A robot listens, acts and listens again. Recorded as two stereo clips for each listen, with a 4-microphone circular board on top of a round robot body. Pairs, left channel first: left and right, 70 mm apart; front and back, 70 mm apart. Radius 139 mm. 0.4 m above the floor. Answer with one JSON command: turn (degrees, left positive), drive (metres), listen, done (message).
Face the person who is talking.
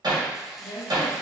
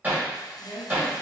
{"turn": 65}
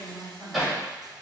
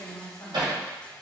{"done": "Found it: a woman speaking, straight ahead, 1 to 2 m away."}